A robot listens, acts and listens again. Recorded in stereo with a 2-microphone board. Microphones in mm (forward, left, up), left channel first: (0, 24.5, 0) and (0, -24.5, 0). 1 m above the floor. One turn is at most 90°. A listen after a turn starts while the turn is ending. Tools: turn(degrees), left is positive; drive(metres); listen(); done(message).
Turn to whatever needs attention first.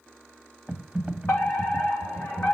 turn(degrees=45)
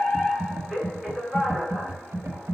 turn(degrees=10)
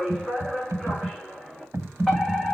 done("Found it: a fire alarm, straight ahead, 2 to 4 m away.")